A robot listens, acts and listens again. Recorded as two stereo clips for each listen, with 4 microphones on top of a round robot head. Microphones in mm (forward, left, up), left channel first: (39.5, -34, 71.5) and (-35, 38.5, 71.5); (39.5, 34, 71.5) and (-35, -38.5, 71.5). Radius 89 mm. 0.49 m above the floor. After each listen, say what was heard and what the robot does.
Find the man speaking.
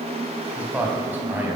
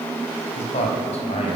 The man speaking: 65° left. Turn 65° left.
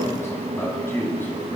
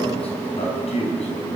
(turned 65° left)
The man speaking is now 25° left. Turn 25° left.
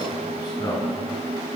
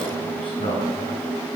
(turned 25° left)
The man speaking is now 10° left. Turn 10° left.
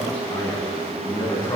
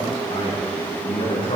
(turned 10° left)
Facing the man speaking, over 4 m away.